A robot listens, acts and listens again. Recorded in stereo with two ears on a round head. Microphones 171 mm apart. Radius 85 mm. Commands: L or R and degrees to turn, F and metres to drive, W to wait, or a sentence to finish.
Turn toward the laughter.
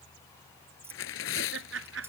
R70
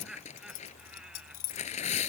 Facing the laughter.